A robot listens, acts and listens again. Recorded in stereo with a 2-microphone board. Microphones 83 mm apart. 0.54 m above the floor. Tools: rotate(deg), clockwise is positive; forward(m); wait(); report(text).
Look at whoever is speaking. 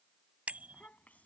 rotate(-20)
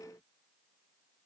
wait()
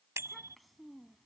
report("Found it: a child speaking, straight ahead.")